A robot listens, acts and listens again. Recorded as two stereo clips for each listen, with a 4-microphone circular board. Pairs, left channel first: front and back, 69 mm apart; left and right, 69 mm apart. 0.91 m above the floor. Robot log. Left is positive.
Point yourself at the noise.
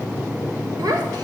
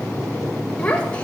note: The child speaking: 160° left.
cmd yaw +160
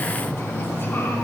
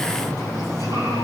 cmd idle
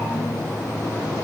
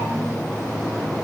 cmd idle
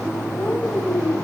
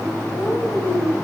note: The child speaking is now 65° left.
cmd yaw +65
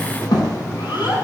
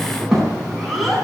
end: Facing the child speaking, over 4 m away.